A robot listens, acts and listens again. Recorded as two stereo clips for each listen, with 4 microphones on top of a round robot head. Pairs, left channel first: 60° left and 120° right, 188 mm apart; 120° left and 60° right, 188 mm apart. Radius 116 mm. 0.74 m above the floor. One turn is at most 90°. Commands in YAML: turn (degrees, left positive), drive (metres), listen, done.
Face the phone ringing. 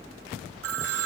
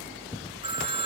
turn: -90
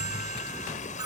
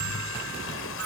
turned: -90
turn: -35
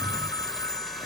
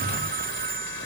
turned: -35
turn: -15
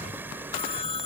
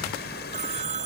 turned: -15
done: "Facing the phone ringing."